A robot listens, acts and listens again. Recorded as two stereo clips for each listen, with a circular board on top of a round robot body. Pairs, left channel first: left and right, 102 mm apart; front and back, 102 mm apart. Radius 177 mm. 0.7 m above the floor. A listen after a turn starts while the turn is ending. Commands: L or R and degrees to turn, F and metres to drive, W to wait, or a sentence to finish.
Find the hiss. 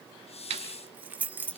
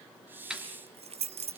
L110
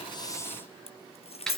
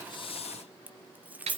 W
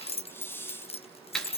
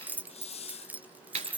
L20
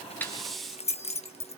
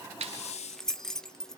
Found it: a hiss, straight ahead, under 1 m away.